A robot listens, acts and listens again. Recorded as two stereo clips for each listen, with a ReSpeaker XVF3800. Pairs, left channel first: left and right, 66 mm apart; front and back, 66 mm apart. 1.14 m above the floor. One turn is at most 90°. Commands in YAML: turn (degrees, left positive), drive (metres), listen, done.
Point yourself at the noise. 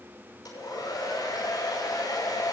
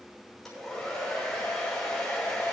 turn: 85
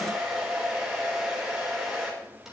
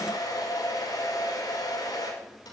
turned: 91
turn: -10
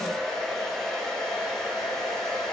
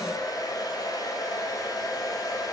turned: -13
done: "Found it: a hair dryer, straight ahead, over 4 m away."